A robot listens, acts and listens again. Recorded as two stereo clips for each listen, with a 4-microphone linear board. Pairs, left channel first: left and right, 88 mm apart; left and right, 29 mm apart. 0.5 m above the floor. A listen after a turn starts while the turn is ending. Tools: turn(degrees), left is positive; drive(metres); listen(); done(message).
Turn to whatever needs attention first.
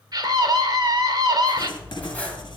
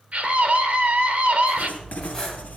turn(degrees=-50)
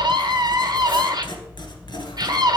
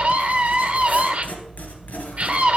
turn(degrees=-65)
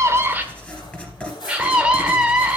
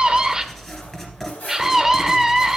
turn(degrees=-15)
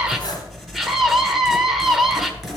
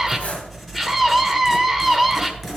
done("Facing the scream.")